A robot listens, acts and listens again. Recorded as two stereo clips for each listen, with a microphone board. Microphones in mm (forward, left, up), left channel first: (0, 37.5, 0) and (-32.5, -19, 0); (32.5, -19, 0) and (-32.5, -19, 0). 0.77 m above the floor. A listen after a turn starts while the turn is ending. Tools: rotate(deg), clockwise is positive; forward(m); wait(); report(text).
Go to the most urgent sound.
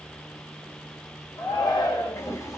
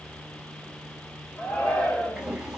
rotate(-65)
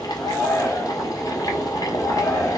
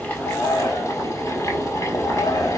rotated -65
forward(1.0)
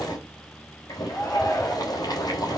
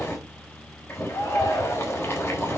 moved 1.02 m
forward(1.0)
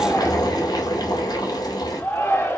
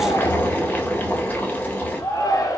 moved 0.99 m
forward(1.0)
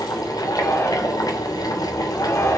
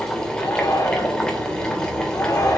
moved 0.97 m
rotate(-10)
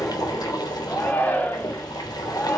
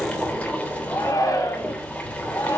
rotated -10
forward(1.0)
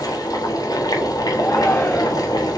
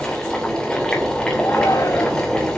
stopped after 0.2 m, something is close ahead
report("Arrived at the shout, straight ahead.")